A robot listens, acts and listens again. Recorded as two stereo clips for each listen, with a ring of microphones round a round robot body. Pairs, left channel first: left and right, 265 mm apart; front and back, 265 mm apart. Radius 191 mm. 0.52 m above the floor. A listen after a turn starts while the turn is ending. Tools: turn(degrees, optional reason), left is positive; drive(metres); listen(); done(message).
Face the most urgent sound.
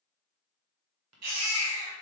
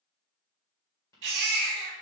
turn(degrees=-140, reason="The baby crying: 140° right.")
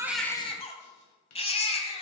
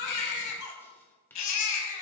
turn(degrees=20, reason="The baby crying is now 20° left.")
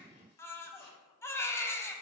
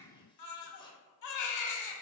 turn(degrees=10, reason="The baby crying is now 10° left.")
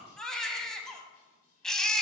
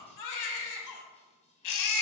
done("Found it: a baby crying, straight ahead, 1 to 2 m away.")